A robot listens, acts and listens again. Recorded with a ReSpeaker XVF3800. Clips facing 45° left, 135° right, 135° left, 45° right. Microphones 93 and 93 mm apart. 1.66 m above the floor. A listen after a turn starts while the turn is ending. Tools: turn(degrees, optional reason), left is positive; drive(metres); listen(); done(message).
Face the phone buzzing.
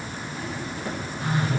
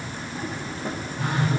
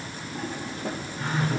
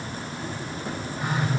turn(degrees=-120, reason="The phone buzzing: 120° right.")
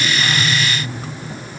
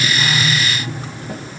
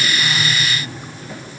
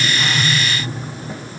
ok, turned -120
turn(degrees=-35, reason="The phone buzzing is now 35° right.")
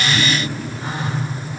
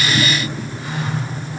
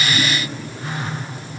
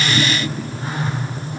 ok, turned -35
done("Facing the phone buzzing.")